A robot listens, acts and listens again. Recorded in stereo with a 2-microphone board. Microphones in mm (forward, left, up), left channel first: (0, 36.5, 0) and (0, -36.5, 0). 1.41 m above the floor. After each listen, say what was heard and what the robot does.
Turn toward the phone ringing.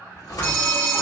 The phone ringing: about 20° left or 160° left. Turn 20° left.
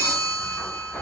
So it is at 135° left. Turn 135° left.
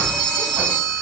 The phone ringing is now 10° left. Turn 10° left.
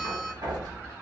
Keep listening.
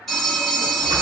Facing the phone ringing, 1 to 2 m away.